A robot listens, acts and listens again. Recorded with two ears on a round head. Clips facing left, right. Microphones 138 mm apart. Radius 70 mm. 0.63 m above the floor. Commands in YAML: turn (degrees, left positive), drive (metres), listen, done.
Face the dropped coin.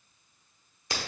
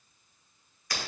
listen: true
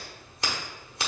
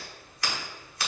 listen: true
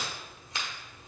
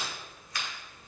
done: "I can't make out a dropped coin to turn to."